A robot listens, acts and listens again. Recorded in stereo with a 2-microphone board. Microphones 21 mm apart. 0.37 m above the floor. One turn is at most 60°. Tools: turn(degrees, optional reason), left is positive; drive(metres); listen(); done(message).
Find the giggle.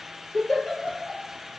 turn(degrees=30, reason="The giggle: about 30° left or 150° left.")
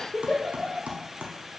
turn(degrees=60, reason="So it is at 120° left.")
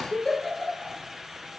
turn(degrees=35, reason="The giggle is now 35° left.")
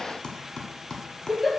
turn(degrees=-10, reason="The giggle is now 10° right.")
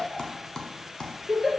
done("Found it: a giggle, straight ahead.")